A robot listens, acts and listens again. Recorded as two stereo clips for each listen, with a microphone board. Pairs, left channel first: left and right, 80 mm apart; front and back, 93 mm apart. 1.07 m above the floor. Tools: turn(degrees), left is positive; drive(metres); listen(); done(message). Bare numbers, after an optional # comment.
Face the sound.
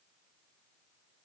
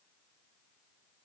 listen()
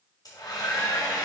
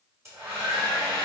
# The hair dryer: 125° left.
turn(125)
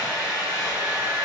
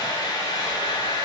# The hair dryer is now 45° left.
turn(45)
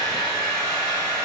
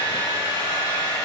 # The hair dryer is now 10° left.
turn(10)
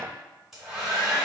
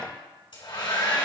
done("Facing the hair dryer, 2 to 4 m away.")